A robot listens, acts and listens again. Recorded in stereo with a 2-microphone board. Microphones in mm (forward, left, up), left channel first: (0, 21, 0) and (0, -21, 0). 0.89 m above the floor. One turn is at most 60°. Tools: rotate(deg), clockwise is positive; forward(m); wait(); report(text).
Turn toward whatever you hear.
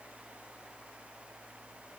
wait()
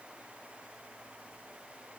wait()
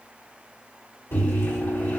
rotate(-60)
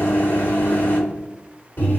rotate(-45)
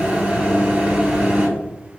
rotate(35)
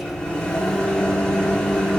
rotate(-15)
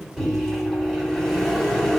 report("Facing the microwave, 1 to 2 m away.")